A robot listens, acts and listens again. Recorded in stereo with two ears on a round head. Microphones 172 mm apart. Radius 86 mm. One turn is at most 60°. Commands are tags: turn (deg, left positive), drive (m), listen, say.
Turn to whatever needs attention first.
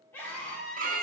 <turn deg="30"/>
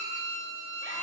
<listen/>
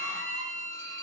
<listen/>
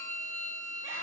<say>I heard a scream, but can't make it out now. It was about 20° right or 140° left.</say>